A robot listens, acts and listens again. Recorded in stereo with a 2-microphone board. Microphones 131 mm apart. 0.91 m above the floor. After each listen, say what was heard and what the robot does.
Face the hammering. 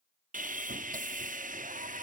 Keep listening.
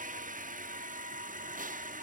Keep listening.
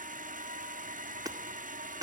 The hammering: about 25° right or 155° right. Turn 25° right.
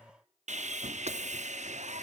Keep listening.
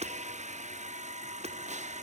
So it is at 125° right. Turn 125° right.
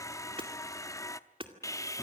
The hammering is now 40° right. Turn 40° right.
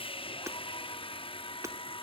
The hammering is now 20° right. Turn 20° right.
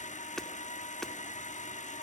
Facing the hammering, 2 to 4 m away.